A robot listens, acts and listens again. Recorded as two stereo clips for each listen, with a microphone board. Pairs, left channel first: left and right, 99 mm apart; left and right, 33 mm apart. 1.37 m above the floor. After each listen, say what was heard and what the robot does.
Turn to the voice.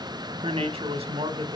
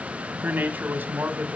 Turn 90° right.
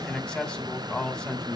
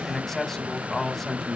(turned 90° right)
So it is at 10° left. Turn 10° left.
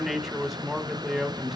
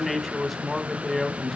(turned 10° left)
Facing the man speaking.